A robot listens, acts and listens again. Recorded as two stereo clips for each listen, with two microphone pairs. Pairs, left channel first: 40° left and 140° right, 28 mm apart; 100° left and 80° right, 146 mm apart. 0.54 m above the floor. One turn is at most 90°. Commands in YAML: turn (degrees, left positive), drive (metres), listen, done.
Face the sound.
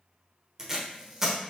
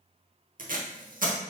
turn: -70
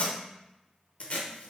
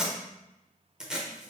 done: "Facing the tape being pulled, under 1 m away."